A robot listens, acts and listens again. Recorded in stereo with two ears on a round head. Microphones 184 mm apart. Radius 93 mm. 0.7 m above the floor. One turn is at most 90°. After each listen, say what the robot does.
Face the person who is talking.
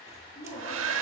Turn 35° left.
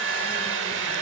Keep listening.
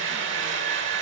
Keep listening.
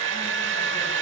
I heard a woman speaking, but can't make it out now. It was about straight ahead or 110° left.